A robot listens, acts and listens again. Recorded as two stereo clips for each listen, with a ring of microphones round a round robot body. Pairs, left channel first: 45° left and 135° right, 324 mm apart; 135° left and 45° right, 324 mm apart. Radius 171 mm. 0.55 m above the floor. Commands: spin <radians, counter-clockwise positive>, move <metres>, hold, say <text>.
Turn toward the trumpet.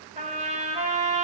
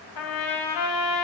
spin 2.71
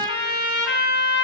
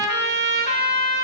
spin 0.26
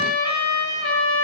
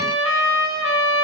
say Facing the trumpet, 2 to 4 m away.